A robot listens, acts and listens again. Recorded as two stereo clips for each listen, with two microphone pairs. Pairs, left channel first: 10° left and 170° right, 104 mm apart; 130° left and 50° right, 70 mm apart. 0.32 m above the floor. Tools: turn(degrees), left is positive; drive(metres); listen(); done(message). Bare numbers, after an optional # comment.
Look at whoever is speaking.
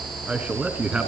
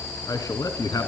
# The man speaking: 110° left.
turn(110)
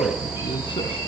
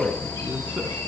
listen()
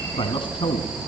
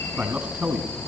# The man speaking is now 15° left.
turn(15)
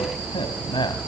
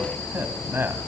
done("Found it: a man speaking, straight ahead, 1 to 2 m away.")